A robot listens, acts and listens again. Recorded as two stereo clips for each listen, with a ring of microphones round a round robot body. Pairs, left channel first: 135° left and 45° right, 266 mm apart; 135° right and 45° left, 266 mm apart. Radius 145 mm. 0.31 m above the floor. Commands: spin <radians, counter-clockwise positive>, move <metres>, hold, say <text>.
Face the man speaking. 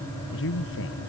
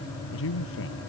spin 3.14
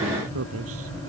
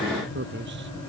say Facing the man speaking.